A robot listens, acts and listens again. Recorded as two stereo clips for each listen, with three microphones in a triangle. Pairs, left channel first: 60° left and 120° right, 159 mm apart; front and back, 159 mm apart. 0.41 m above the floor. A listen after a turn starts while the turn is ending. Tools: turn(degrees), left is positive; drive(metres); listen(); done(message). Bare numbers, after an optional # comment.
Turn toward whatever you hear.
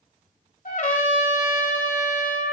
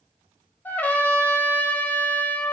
# The trumpet: 75° left.
turn(75)
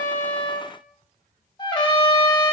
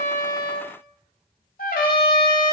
done("Facing the trumpet, 1 to 2 m away.")